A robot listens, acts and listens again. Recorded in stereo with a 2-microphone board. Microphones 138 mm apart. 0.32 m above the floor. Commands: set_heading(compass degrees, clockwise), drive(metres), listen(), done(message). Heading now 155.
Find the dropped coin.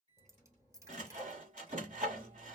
set_heading(175)
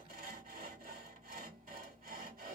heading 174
listen()
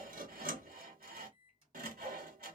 done("I heard a dropped coin, but can't make it out now. It was about 5° right or 140° right.")